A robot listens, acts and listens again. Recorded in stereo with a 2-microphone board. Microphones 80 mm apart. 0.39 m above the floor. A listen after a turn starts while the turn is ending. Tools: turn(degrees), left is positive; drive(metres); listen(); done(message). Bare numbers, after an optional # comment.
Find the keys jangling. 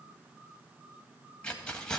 turn(30)
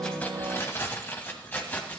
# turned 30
# So it is at 160° left.
turn(160)
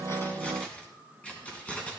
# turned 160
# The keys jangling is now 15° left.
turn(15)
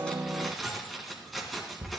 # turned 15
done("Facing the keys jangling.")